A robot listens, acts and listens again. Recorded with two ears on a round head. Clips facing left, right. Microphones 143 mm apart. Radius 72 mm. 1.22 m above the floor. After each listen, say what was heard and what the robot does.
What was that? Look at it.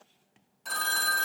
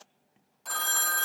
Turn 30° left.
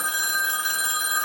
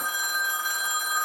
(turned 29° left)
So it is at 150° left. Turn 150° left.
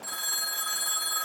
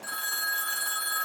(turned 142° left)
Found it: a phone ringing, straight ahead.